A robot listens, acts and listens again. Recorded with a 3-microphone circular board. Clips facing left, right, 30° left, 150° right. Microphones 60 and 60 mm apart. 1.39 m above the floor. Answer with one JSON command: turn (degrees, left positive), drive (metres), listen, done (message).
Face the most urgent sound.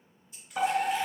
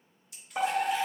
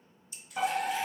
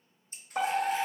{"turn": -150}
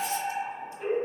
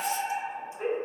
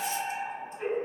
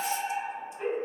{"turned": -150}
{"turn": -70}
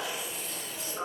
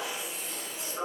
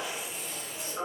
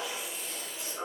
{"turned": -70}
{"done": "Found it: a fire alarm, straight ahead."}